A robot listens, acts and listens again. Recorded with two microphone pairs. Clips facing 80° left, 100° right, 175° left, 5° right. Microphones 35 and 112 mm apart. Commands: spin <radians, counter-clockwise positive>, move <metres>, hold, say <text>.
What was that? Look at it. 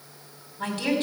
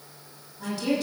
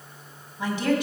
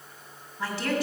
spin 1.83
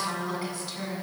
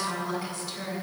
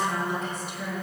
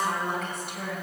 say Facing the woman speaking, 2 to 4 m away.